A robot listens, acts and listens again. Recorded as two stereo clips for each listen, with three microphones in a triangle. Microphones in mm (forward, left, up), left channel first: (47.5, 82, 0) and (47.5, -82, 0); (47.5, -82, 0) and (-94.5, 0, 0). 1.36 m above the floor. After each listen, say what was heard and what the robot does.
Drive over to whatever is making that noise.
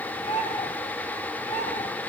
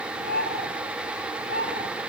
The bird: 135° left. Turn 135° left.
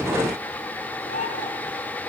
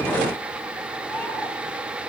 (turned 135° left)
The bird is now 50° left. Turn 50° left.
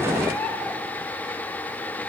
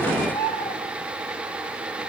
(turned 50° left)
Drive 1.0 m forward.
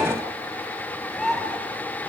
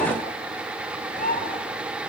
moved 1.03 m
Drive 1.0 m forward.
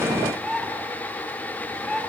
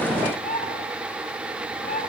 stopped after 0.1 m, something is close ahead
Something is in my way. I am facing the bird but have not reached it.